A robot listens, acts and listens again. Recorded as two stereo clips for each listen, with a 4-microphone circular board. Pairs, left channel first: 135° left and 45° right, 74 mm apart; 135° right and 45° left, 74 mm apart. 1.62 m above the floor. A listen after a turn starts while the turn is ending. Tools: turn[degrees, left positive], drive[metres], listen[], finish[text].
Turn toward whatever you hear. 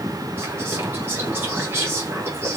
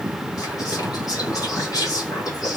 Thought: The whispering: 100° right.
Action: turn[-100]
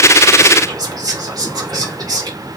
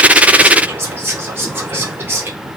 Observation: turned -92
Thought: The whispering is now 10° right.
Action: turn[-10]
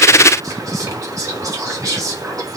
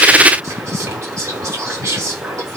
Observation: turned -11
Action: finish[Facing the whispering.]